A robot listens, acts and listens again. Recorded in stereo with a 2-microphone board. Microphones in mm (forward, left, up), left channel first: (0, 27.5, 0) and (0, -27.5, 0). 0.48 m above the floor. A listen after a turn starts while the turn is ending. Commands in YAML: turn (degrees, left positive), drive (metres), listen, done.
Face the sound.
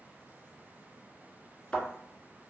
turn: 30
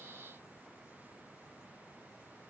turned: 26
listen: true
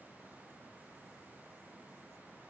done: "I heard a thud, but can't make it out now. It was about 10° right or 140° left."